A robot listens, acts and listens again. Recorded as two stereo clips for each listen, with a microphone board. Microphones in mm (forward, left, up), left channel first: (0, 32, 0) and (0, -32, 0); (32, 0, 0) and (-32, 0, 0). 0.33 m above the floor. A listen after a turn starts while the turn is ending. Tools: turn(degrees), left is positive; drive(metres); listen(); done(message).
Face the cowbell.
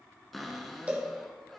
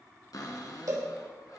turn(degrees=-160)
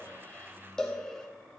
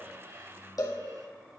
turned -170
turn(degrees=10)
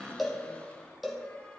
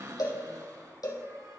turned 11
done("Found it: a cowbell, straight ahead, 1 to 2 m away.")